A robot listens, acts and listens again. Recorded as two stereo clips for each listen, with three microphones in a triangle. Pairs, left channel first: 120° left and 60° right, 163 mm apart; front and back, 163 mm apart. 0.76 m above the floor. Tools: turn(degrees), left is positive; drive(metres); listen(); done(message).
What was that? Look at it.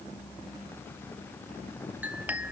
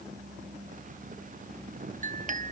turn(degrees=-140)
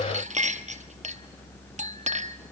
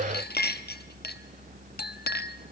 turn(degrees=-15)
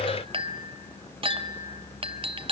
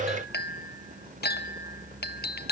done("Found it: a clink, straight ahead, 1 to 2 m away.")